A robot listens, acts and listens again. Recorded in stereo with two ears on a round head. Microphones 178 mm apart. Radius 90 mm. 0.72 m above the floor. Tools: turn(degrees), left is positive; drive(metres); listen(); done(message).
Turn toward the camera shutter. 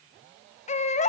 listen()
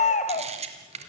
turn(degrees=-35)
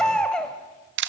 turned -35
turn(degrees=-115)
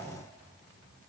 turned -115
listen()
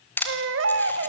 turn(degrees=10)
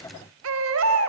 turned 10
listen()
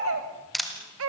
done("Facing the camera shutter.")